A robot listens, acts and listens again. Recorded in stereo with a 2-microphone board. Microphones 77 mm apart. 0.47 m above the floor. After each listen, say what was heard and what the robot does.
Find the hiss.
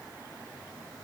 Keep listening.
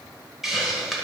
Turn 30° right.
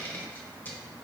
So it is at 25° left. Turn 25° left.
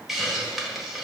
Found it: a hiss, straight ahead.